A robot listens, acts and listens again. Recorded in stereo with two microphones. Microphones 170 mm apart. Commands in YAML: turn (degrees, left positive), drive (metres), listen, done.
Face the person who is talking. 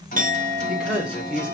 turn: -30
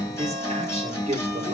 turn: -145
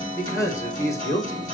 turn: 20
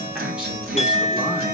listen: true
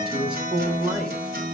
done: "Facing the man speaking."